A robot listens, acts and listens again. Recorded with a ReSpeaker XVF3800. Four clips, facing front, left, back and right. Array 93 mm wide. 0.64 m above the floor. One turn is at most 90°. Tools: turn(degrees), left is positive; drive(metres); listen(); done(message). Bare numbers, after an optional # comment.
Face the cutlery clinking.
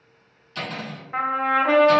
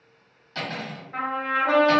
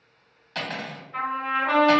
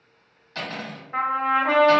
# The cutlery clinking: straight behind.
turn(90)
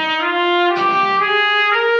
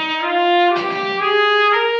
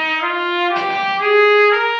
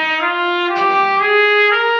# Nothing new. It was at 90° left.
turn(90)
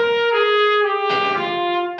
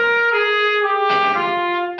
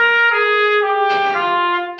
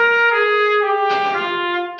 # The cutlery clinking is now 60° left.
turn(60)
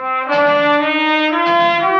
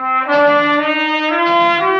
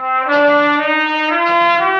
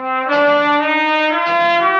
listen()
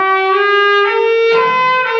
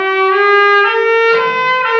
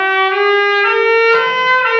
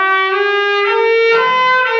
listen()
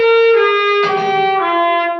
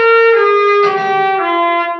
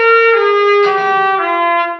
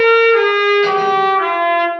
done("Facing where the cutlery clinking came from. I can't hear it now.")